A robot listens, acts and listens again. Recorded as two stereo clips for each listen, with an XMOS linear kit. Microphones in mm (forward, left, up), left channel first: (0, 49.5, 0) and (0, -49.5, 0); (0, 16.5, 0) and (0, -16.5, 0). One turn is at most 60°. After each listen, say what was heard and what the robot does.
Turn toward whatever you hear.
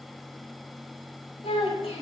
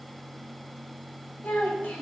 Turn 60° left.
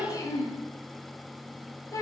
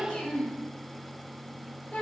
So it is at 35° left. Turn 35° left.
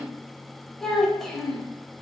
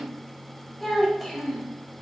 Found it: a child speaking, straight ahead, 1 to 2 m away.